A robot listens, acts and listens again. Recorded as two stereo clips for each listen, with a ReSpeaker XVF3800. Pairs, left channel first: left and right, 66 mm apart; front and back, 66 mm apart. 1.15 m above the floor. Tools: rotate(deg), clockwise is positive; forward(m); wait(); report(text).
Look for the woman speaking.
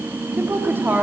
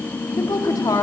rotate(30)
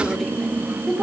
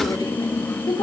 report("Facing the woman speaking, 2 to 4 m away.")